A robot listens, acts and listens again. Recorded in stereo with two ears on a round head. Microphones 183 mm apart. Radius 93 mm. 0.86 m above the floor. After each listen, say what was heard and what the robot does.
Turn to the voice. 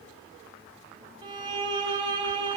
Keep listening.
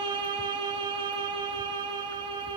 Keep listening.
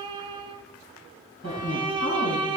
The woman speaking: about 50° left or 130° left. Turn 50° left.
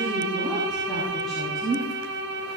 Found it: a woman speaking, straight ahead.